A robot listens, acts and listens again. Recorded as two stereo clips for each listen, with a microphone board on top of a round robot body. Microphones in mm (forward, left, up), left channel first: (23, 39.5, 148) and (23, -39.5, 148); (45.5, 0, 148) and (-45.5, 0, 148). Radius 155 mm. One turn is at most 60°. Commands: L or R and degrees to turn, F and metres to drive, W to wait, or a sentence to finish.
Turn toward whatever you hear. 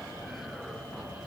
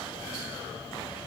W
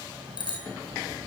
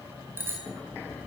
L60
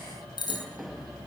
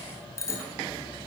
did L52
L60
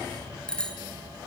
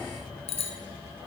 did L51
L10
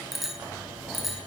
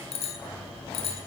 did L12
Facing the bicycle bell, over 4 m away.